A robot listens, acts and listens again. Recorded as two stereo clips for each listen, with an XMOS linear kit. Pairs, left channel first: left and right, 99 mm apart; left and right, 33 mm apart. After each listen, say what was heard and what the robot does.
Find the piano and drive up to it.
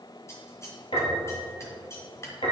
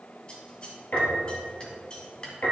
The piano: about 65° left or 115° left. Turn 65° left.
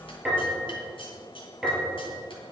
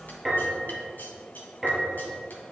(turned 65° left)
Drive 1.0 m forward.
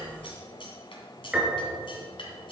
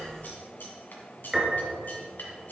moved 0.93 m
The piano is now 10° right. Turn 10° right.
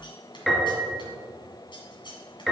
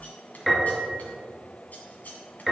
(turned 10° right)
Drive 1.0 m forward.
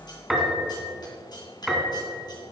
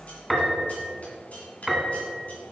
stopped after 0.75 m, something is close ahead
I am next to the piano.